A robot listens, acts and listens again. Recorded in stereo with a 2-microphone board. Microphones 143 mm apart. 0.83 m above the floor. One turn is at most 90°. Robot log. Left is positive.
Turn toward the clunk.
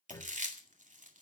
note: The clunk: about 20° left or 160° left.
cmd yaw +20
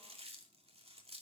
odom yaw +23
cmd idle
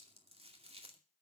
end: I heard a clunk, but can't make it out now. It was about straight ahead or 135° left.